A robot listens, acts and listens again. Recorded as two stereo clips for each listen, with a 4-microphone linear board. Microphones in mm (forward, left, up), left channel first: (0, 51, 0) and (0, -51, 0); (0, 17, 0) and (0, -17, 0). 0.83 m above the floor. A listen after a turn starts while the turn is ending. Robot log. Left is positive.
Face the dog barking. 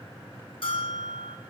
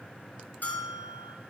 cmd idle
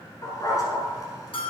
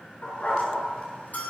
note: The dog barking: about 40° left or 140° left.
cmd yaw +40
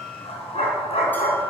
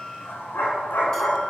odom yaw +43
note: So it is at 95° left.
cmd yaw +95
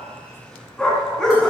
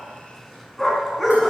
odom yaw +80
end: Facing the dog barking.